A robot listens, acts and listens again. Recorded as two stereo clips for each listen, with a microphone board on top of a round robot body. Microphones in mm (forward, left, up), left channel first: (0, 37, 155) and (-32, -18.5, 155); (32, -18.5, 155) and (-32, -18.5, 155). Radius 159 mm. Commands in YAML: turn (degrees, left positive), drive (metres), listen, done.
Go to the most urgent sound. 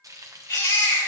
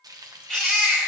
turn: 80
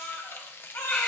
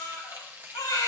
drive: 1.0
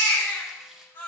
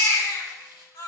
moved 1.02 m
drive: 1.0
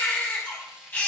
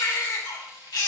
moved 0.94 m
drive: 1.0
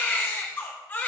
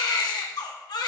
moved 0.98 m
drive: 1.0
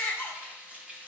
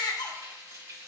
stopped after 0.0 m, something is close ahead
done: "I am next to the baby crying."